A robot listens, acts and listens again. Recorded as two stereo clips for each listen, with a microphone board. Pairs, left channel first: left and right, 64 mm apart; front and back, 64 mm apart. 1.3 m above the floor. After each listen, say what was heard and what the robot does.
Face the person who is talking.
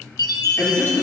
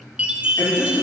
The man speaking: 35° left. Turn 35° left.
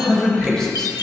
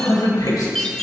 The man speaking is now 10° left. Turn 10° left.
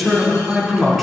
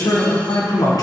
Found it: a man speaking, straight ahead, over 4 m away.